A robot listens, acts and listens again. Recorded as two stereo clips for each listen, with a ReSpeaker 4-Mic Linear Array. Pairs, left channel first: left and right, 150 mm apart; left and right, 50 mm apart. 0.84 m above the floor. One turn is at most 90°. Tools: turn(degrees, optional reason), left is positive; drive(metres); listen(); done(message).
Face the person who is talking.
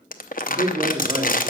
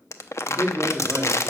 turn(degrees=-25, reason="The man speaking: about 25° right or 155° right.")
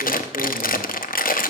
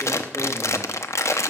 listen()
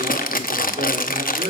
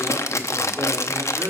turn(degrees=-90, reason="So it is at 130° right.")
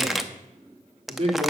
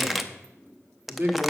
turn(degrees=-50, reason="The man speaking is now 50° right.")
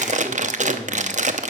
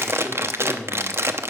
turn(degrees=10, reason="The man speaking is now 10° left.")
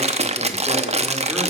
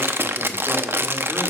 listen()
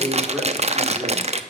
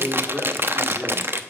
done("Facing the man speaking, 2 to 4 m away.")